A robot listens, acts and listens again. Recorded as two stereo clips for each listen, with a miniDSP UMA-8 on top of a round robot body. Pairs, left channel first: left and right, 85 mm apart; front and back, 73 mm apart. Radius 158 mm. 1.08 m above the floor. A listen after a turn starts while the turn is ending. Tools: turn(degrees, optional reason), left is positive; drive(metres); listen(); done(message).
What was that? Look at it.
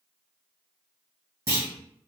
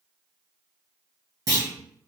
turn(degrees=-145, reason="The clunk: 145° right.")
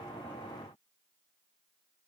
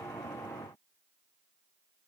done("Facing where the clunk came from. I can't hear it now.")